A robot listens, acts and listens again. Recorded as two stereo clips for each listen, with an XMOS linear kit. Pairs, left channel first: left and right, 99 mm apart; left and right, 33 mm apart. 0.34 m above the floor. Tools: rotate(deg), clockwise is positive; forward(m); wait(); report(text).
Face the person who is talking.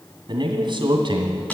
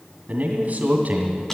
rotate(50)
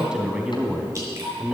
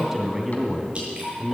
rotate(10)
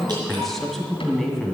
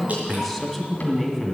report("Found it: a man speaking, straight ahead.")